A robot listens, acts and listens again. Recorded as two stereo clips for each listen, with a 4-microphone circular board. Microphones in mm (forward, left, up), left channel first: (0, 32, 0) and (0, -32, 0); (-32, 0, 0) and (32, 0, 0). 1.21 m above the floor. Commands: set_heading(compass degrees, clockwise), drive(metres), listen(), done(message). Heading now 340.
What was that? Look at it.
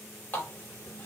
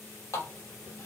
set_heading(195)
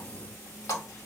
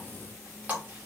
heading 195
set_heading(135)
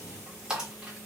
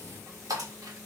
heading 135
set_heading(150)
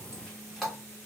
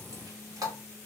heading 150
done("Facing the running tap, 1 to 2 m away.")